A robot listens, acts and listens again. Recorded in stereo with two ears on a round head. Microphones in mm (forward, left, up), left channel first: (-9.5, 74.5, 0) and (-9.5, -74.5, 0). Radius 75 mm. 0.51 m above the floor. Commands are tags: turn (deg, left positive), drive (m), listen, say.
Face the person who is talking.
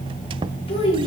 <turn deg="35"/>
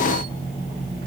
<listen/>
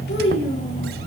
<turn deg="110"/>
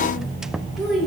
<say>Found it: a child speaking, straight ahead, over 4 m away.</say>